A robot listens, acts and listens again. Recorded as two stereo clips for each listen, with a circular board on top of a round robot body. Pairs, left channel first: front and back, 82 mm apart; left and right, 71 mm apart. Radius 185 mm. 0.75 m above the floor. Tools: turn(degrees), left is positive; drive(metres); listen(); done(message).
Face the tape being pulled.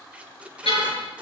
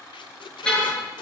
turn(degrees=100)
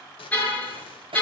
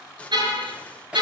turn(degrees=15)
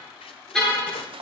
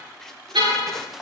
listen()
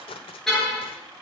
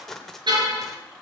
done("Found it: tape being pulled, straight ahead.")